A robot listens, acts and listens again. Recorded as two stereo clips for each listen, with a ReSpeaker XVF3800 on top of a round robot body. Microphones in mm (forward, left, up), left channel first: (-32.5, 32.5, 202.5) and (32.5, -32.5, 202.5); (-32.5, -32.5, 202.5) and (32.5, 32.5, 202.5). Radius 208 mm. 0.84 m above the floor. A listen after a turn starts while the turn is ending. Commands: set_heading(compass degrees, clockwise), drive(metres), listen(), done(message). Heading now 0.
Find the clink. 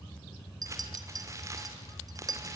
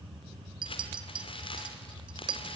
done("Facing the clink.")